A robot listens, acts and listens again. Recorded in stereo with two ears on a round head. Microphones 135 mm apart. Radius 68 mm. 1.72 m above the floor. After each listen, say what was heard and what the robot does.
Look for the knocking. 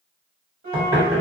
The knocking: about 30° right or 150° right. Turn 30° right.
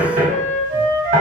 So it is at 120° right. Turn 120° right.
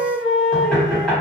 The knocking is now 10° left. Turn 10° left.
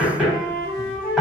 Found it: knocking, straight ahead.